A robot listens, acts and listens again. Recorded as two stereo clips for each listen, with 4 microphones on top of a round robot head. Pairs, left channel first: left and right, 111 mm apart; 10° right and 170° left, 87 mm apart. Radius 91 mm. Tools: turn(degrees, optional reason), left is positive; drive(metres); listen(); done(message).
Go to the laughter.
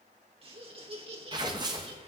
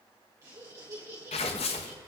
turn(degrees=-125, reason="The laughter: 125° right.")
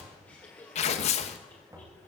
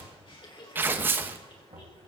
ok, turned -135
turn(degrees=10, reason="The laughter is now 10° left.")
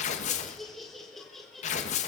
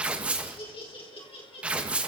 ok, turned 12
drive(metres=1.0)
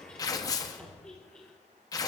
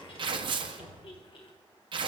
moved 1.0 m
drive(metres=1.0)
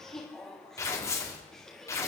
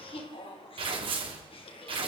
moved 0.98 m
drive(metres=1.0)
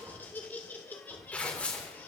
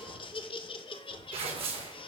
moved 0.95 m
turn(degrees=10, reason="The laughter is now 10° left.")
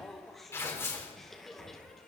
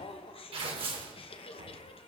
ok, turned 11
drive(metres=1.0)
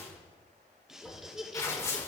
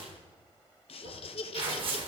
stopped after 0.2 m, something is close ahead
done("I am next to the laughter.")